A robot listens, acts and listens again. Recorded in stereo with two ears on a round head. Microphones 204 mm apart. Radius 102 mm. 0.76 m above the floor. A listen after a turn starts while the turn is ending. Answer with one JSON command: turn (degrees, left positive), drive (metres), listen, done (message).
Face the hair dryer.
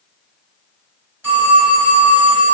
{"listen": true}
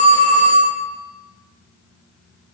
{"listen": true}
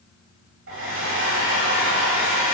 {"turn": -60}
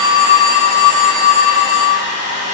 {"turn": -35}
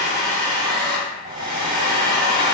{"turn": -25}
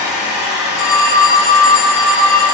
{"done": "Facing the hair dryer."}